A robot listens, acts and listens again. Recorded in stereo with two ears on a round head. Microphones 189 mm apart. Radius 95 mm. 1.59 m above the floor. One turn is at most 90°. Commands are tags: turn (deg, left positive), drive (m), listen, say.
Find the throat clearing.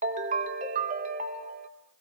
<listen/>
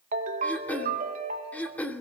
<turn deg="30"/>
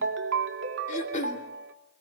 <turn deg="90"/>
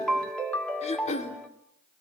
<turn deg="30"/>
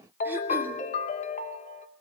<listen/>
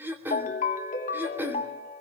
<turn deg="-10"/>
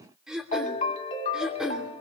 <say>Found it: throat clearing, straight ahead.</say>